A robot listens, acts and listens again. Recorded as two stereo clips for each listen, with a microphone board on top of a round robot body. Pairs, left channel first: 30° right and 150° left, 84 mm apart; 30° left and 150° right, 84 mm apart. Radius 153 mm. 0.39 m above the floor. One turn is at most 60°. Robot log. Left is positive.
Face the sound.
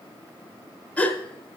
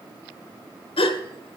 note: The gasp: 45° left.
cmd yaw +45
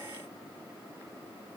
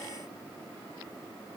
end: I heard a gasp from this way, but can't make it out now.